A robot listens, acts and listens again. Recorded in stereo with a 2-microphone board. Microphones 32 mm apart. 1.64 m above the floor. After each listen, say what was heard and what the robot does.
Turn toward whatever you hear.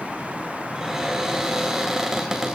Turn 30° right.
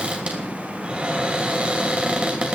So it is at 130° right. Turn 130° right.
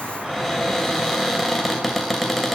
Facing the cupboard door, 2 to 4 m away.